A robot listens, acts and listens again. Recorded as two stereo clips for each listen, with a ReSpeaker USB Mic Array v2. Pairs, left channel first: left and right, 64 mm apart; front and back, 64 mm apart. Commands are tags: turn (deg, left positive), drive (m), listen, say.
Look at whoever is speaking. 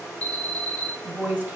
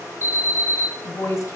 <turn deg="-30"/>
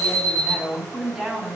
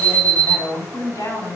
<say>Facing the woman speaking.</say>